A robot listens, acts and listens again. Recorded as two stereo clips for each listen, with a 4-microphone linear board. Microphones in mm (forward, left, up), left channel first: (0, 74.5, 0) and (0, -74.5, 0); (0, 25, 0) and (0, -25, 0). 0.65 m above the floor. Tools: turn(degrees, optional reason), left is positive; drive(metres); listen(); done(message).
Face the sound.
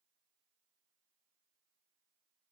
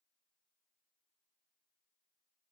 listen()
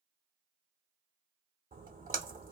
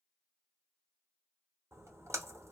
turn(degrees=-65, reason="The splash: about 65° right or 115° right.")
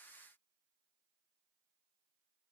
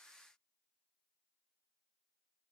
listen()
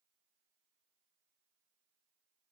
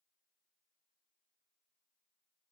done("I heard a splash, but can't make it out now. It was about straight ahead or 50° right.")